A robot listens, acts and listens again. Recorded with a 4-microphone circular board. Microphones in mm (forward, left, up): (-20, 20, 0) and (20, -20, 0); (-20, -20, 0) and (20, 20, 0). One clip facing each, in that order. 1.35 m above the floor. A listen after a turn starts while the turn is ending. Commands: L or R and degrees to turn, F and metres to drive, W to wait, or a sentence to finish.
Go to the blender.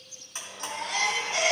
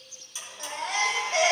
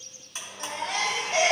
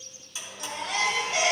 L175
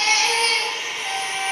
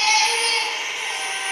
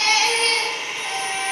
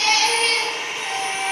L30
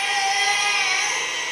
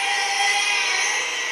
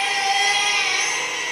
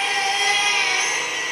L10
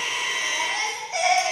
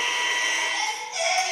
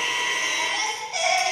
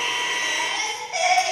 F1.0
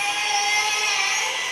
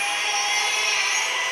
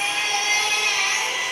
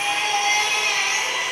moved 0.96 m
F1.0
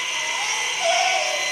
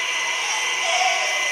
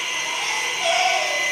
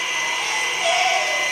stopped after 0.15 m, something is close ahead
L10
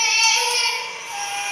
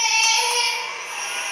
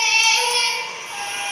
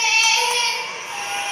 W
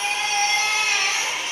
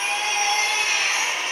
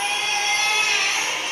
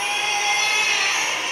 I am next to the blender.